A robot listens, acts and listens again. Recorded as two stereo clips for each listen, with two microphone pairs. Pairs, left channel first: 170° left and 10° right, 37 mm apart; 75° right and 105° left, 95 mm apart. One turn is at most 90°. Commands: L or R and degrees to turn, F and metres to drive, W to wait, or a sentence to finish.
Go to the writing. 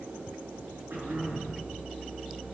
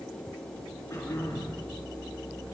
W
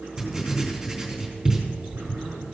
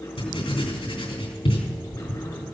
R80
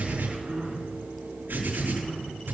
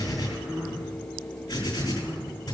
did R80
R25
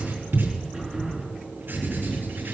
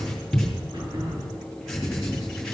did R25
L15
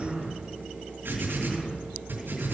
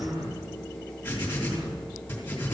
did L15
F1.0
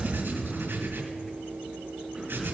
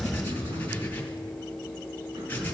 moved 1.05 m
F1.0
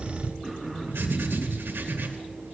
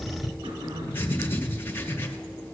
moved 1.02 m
F1.0
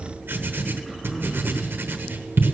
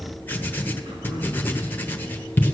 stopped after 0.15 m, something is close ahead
I am next to the writing.